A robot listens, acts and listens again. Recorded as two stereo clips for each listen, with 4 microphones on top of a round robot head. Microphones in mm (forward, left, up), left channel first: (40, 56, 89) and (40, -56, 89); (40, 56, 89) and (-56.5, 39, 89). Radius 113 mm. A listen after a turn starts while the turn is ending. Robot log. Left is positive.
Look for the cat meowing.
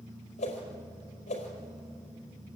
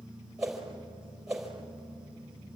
cmd idle
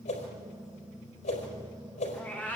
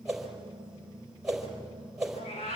note: The cat meowing: 15° left.
cmd yaw +15
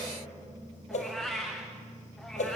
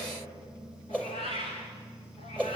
end: Facing the cat meowing, over 4 m away.